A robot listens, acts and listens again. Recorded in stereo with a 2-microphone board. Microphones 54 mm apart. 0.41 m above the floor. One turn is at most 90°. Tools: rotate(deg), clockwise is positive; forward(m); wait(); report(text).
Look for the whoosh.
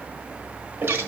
wait()
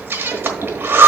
wait()
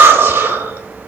report("I can't make out a whoosh, only breathing.")